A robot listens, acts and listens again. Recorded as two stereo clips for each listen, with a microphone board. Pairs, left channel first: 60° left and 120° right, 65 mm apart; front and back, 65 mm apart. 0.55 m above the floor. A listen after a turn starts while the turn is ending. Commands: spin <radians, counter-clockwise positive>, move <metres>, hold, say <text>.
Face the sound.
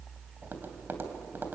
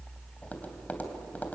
spin -1.13
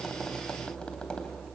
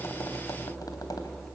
hold
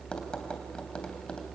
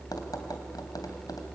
spin -0.26
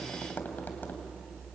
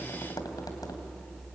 say Found it: tapping, straight ahead, 2 to 4 m away.